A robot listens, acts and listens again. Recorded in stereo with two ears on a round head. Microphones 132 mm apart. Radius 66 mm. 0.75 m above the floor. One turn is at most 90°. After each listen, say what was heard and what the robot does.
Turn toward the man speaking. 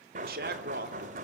The man speaking: about 70° right or 110° right. Turn 70° right.
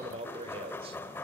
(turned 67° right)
So it is at 40° right. Turn 40° right.
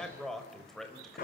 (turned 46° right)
Found it: a man speaking, straight ahead.